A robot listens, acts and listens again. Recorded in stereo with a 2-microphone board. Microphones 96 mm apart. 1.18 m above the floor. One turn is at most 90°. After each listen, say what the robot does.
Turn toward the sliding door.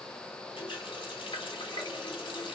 Keep listening.
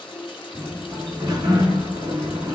Turn 45° right.
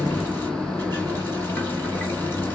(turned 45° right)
Found it: a sliding door, straight ahead.